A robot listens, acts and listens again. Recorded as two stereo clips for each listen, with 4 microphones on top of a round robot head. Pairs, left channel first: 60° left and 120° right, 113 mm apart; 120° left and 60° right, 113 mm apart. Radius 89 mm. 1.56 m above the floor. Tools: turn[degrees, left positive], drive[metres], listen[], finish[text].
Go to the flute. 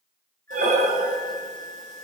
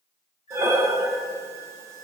Thought: The flute: 135° left.
Action: turn[135]
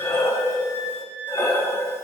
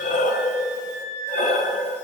Thought: The flute is now 30° left.
Action: turn[30]
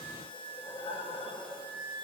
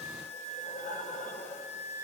Action: drive[1.0]
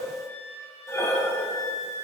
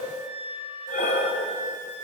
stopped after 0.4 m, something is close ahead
Action: finish[Something is in my way. I am facing the flute but have not reached it.]